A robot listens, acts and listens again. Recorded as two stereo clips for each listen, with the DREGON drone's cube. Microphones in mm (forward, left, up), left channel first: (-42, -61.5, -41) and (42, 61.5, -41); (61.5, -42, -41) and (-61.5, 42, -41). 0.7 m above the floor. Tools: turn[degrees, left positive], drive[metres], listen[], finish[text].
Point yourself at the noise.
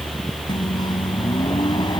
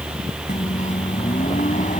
Thought: The microwave: 65° right.
Action: turn[-65]
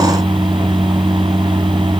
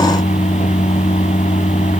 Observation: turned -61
Action: finish[Found it: a microwave, straight ahead.]